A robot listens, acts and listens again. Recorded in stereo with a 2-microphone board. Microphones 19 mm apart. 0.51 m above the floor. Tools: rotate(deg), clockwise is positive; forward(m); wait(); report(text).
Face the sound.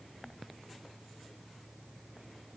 wait()
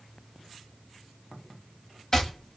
rotate(-25)
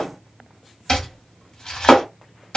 rotate(-125)
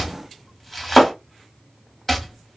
rotate(-15)
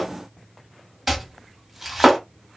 report("Found it: chopping, straight ahead.")